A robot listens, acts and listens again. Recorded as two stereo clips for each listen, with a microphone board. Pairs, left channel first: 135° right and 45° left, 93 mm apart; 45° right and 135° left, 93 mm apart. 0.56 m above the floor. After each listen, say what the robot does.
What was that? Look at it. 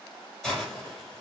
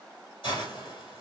Turn 50° right.
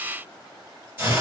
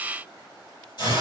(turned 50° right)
Turn 20° right.
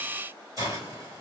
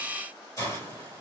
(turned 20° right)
Facing the hiss, 2 to 4 m away.